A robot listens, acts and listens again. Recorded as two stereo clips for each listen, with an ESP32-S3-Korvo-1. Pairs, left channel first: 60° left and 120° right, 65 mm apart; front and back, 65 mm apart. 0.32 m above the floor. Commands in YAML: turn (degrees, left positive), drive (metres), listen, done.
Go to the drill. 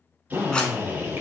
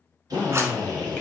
turn: 180
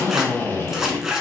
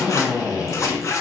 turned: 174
drive: 1.0
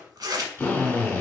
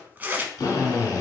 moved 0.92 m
turn: 10
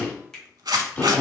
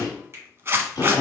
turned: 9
drive: 1.0
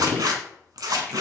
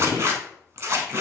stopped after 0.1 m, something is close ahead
done: "Arrived at the drill, straight ahead."